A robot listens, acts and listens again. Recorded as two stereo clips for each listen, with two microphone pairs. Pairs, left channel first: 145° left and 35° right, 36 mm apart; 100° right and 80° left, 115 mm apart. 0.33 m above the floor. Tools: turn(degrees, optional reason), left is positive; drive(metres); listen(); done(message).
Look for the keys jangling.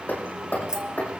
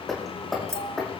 turn(degrees=20, reason="The keys jangling: 20° left.")
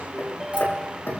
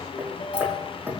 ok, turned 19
listen()
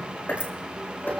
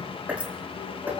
listen()
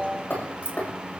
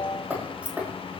done("Found it: keys jangling, straight ahead.")